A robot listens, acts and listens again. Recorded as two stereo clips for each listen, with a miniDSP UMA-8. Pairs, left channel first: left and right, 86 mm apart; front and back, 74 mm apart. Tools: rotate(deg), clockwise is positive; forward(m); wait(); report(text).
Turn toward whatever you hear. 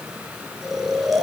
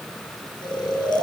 report("Facing the snoring.")